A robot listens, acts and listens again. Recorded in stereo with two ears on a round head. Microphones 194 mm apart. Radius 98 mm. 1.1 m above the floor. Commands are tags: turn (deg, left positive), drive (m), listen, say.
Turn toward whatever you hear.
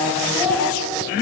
<turn deg="-30"/>
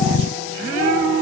<listen/>
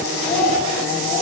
<turn deg="10"/>
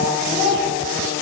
<say>Found it: a child speaking, straight ahead, 2 to 4 m away.</say>